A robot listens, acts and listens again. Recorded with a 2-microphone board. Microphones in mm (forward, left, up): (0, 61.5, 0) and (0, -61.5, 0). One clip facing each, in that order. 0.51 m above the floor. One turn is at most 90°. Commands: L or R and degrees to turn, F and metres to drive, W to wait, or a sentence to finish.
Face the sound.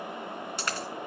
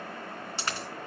R30
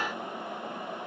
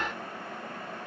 W
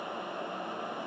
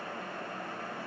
I heard a dropped coin, but can't make it out now. It was about straight ahead or 120° right.